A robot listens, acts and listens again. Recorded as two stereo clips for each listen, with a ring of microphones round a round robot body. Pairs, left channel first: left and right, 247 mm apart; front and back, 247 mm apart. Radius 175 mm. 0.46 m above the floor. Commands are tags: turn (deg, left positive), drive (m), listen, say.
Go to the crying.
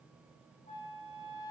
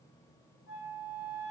<listen/>
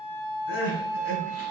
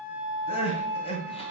<turn deg="65"/>
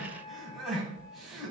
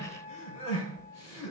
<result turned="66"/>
<drive m="1.0"/>
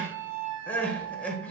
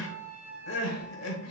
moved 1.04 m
<drive m="1.0"/>
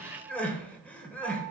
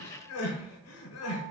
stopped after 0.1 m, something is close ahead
<say>I am next to the crying.</say>